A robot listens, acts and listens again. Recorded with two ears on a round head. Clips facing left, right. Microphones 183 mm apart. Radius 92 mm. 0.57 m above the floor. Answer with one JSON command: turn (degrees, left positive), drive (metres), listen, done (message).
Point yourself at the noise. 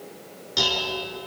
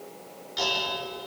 {"turn": 55}
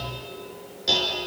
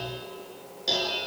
{"done": "Facing the dishes clattering."}